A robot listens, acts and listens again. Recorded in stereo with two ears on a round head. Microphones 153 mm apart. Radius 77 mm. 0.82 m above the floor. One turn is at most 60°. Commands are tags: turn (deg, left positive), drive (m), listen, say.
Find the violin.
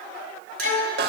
<turn deg="60"/>
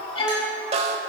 <turn deg="30"/>
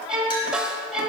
<say>Found it: a violin, straight ahead, 1 to 2 m away.</say>